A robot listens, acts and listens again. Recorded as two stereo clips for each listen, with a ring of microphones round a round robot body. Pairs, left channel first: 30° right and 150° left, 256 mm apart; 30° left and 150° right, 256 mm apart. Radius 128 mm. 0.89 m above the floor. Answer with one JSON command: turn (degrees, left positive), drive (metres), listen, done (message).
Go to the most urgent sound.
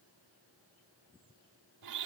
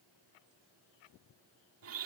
{"listen": true}
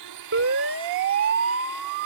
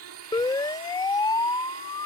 {"turn": 105}
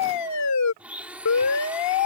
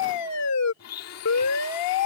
{"drive": 1.0}
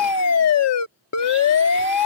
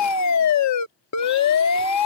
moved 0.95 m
{"drive": 1.0}
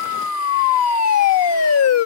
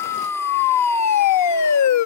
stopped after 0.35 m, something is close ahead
{"done": "I am next to the siren."}